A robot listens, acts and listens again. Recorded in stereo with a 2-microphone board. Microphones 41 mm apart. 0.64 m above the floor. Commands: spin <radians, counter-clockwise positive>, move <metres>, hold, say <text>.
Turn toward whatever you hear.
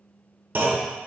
spin -0.96
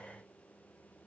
hold
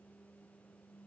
say I heard a clunk, but can't make it out now. It was about straight ahead or 70° right.